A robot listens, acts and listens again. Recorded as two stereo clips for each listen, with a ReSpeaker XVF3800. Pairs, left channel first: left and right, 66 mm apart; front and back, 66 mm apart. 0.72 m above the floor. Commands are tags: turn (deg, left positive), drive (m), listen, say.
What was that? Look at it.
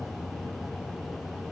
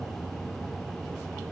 <listen/>
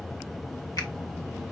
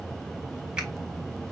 <listen/>
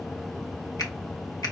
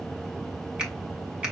<turn deg="105"/>
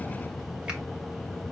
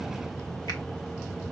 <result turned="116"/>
<turn deg="-10"/>
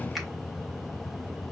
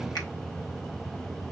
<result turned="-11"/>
<listen/>
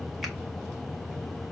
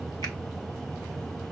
<say>I heard a finger snap from this way, but can't make it out now.</say>